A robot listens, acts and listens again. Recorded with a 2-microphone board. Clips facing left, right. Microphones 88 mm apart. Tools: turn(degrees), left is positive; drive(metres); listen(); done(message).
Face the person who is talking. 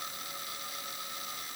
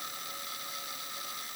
listen()
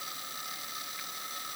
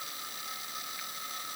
listen()
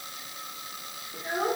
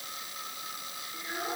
turn(degrees=30)
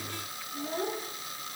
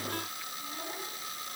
turn(degrees=120)
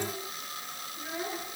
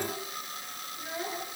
turn(degrees=15)
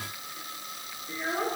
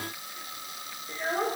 done("Facing the child speaking.")